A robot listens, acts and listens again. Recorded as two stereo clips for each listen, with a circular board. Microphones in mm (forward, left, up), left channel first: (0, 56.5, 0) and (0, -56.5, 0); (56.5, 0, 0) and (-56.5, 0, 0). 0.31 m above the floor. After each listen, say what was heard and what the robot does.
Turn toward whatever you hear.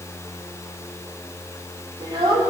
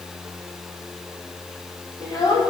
The child speaking: 45° right. Turn 45° right.
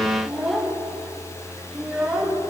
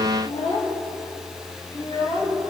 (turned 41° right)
Found it: a child speaking, straight ahead.